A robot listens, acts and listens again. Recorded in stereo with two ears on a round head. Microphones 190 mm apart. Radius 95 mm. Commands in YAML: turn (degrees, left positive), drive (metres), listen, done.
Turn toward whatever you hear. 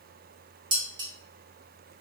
turn: -20
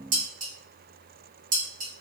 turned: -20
turn: -135
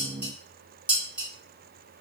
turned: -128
done: "Facing the dishes clattering, 1 to 2 m away."